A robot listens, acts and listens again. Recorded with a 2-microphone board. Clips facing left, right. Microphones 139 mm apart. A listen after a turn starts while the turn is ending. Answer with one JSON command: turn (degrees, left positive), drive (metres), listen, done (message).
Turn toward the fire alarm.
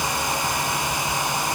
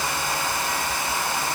{"listen": true}
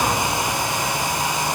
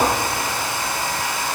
{"listen": true}
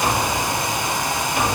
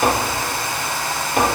{"done": "I can't make out a fire alarm, only tapping."}